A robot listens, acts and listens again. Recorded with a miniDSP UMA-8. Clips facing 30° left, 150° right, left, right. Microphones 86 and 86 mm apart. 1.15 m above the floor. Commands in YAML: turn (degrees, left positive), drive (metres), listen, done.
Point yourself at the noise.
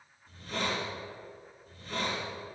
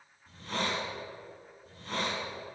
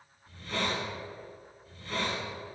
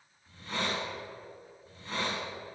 turn: -155
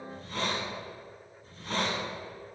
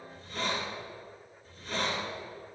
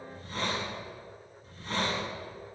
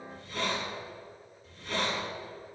turn: 45
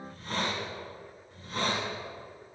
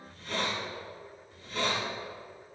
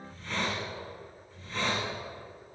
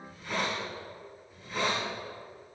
turn: -10
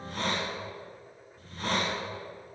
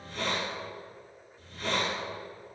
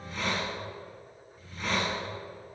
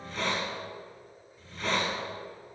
done: "Found it: a hiss, straight ahead."